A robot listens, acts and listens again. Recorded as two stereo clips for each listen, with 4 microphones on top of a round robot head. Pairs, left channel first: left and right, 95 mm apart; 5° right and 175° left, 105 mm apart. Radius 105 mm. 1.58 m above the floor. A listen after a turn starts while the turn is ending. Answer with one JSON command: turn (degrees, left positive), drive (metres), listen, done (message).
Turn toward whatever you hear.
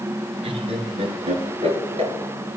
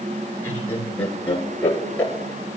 {"turn": -85}
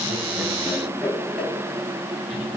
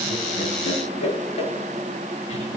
{"done": "Found it: laughter, straight ahead."}